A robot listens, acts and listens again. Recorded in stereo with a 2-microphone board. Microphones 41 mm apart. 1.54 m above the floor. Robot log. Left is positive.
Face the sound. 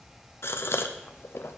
note: The gasp: about 70° left or 110° left.
cmd yaw +70
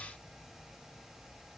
cmd idle
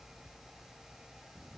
end: I heard a gasp, but can't make it out now. It was about straight ahead or 40° left.